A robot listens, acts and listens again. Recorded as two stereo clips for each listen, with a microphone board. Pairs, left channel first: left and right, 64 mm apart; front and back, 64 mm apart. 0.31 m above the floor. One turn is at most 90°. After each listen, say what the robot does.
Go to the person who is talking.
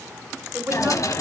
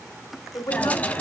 Turn 30° right.
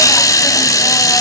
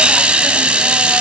Keep listening.
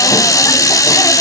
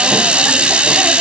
Keep listening.
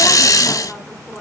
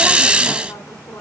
I heard a woman speaking from this way, but can't make it out now. I did not reach it.